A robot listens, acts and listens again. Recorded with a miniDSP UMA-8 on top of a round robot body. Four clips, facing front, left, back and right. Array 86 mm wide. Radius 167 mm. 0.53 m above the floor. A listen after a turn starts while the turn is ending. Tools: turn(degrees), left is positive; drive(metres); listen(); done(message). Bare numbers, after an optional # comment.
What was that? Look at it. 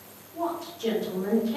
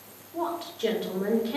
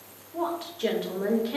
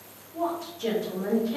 # The woman speaking: 150° left.
turn(150)
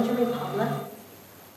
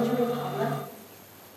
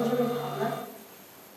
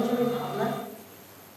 done("Facing the woman speaking.")